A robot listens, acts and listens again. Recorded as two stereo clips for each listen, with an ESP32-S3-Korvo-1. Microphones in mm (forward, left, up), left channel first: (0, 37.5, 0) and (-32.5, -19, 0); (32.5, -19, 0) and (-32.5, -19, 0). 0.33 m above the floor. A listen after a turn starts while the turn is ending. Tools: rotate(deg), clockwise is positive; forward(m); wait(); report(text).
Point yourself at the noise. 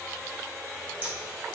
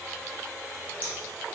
rotate(60)
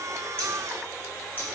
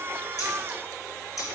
report("Facing the scissors.")